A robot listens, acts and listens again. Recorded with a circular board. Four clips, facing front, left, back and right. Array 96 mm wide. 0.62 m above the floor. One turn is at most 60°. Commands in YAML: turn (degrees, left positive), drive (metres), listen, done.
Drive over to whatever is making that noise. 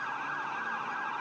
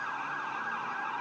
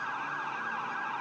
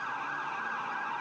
listen: true
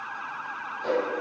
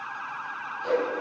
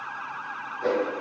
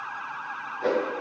turn: -60
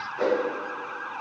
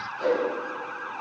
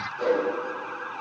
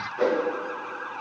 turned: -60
turn: -55
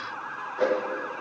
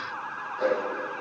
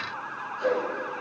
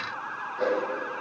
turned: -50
drive: 1.0
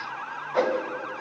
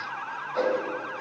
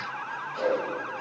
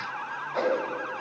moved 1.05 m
turn: -10
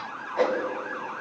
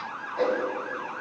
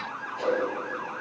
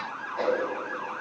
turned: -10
drive: 1.0
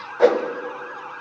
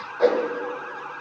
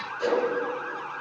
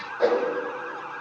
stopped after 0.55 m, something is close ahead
done: "I am next to the whoosh."